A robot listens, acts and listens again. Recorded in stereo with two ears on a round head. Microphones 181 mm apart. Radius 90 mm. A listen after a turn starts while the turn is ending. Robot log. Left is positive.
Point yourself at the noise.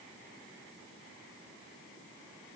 cmd idle
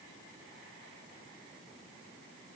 cmd idle
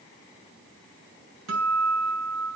cmd yaw -90
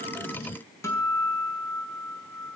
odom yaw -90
note: So it is at 15° left.
cmd yaw +15
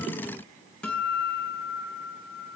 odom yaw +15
end: Found it: a guitar, straight ahead.